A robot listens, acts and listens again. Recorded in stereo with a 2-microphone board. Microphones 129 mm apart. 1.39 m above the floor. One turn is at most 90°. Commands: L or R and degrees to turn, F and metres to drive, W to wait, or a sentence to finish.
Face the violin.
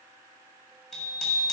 W
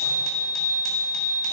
W
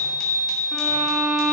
L30
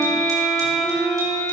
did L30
L90
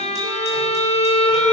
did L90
L60
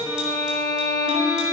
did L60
Found it: a violin, straight ahead, 2 to 4 m away.